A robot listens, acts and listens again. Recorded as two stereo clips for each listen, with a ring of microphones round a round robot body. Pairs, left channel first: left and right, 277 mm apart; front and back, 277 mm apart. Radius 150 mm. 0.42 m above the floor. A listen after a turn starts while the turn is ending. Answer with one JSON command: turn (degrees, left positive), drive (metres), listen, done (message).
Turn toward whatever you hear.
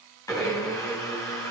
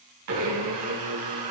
{"turn": 165}
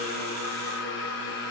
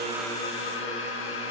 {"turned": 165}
{"turn": 40}
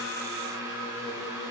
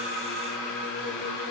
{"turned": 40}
{"turn": -10}
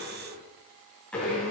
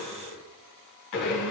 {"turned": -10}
{"done": "Facing the blender, 2 to 4 m away."}